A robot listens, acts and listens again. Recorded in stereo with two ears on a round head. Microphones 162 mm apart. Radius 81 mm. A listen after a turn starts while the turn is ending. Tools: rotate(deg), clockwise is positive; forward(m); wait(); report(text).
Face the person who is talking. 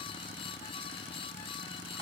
wait()
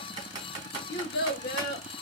rotate(-55)
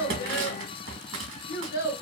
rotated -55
rotate(-65)
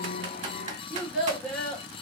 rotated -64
report("Found it: a child speaking, straight ahead, 1 to 2 m away.")